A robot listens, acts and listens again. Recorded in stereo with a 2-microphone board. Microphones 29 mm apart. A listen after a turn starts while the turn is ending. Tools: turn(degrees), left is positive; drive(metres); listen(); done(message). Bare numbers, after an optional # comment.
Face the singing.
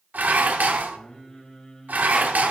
# The singing: about 20° left or 160° left.
turn(20)
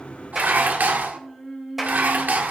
done("Found it: singing, straight ahead.")